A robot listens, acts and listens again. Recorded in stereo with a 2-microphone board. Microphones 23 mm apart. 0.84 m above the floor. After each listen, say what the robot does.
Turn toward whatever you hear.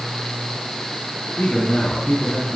Turn 90° left.
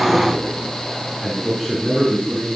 Facing the man speaking.